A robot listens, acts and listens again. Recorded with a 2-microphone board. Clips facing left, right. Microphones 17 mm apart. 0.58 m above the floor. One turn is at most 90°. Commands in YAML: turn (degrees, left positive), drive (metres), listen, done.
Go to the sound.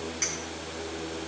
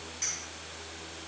turn: 35
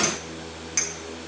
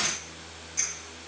turn: 90
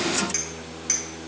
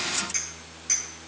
turn: 20
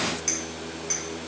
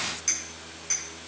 drive: 1.0
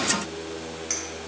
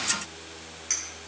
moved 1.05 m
drive: 1.0
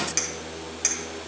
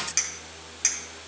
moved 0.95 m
drive: 1.0
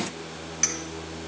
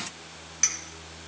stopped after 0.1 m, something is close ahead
done: "Arrived at the clink, straight ahead."